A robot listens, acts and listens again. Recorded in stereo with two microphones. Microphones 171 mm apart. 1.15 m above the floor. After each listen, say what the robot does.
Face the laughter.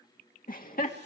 Turn 55° left.
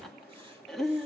Found it: laughter, straight ahead.